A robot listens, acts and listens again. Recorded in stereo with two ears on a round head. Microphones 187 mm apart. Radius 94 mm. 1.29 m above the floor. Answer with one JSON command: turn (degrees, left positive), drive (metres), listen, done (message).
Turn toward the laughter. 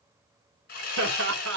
{"turn": -60}
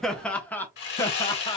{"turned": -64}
{"turn": 25}
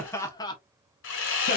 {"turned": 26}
{"turn": 20}
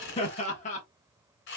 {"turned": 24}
{"turn": 35}
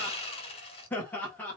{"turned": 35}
{"turn": 10}
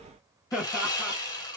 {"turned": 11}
{"done": "Found it: laughter, straight ahead, 1 to 2 m away."}